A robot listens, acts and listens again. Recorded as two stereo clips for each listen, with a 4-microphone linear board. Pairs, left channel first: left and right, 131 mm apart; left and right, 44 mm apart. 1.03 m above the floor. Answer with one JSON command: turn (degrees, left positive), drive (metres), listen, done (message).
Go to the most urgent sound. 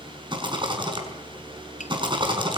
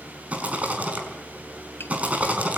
{"listen": true}
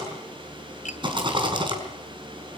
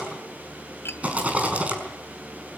{"listen": true}
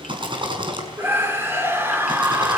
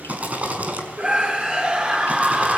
{"turn": -20}
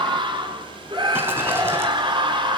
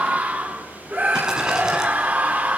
{"turn": -140}
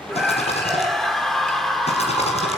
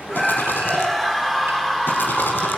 {"drive": 1.0}
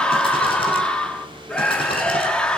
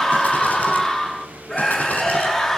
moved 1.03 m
{"drive": 1.0}
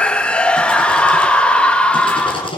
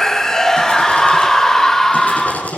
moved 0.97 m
{"turn": 10}
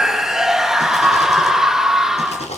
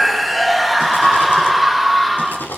{"drive": 1.0}
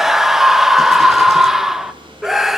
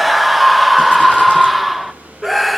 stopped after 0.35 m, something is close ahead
{"done": "Arrived at the scream, straight ahead."}